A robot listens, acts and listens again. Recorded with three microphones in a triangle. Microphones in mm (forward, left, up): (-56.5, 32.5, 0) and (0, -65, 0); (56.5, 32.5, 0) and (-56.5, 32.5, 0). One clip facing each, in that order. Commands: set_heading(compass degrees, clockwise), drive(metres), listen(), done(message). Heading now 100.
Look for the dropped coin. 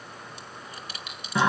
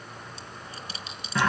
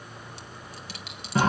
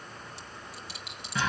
done("Facing the dropped coin, 1 to 2 m away.")